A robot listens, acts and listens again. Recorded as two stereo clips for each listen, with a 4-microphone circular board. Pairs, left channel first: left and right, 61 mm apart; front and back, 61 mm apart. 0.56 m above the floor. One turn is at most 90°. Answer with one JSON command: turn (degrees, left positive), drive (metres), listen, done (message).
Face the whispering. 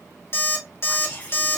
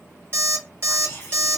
{"turn": 35}
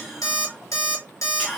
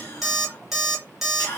{"done": "Facing the whispering, 1 to 2 m away."}